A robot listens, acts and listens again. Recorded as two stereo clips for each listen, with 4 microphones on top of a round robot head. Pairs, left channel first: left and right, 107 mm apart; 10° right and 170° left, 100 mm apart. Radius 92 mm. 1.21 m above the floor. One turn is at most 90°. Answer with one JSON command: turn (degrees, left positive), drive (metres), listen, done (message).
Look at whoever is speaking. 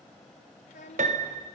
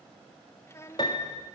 {"turn": 55}
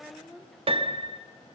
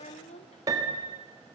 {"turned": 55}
{"done": "Facing the child speaking."}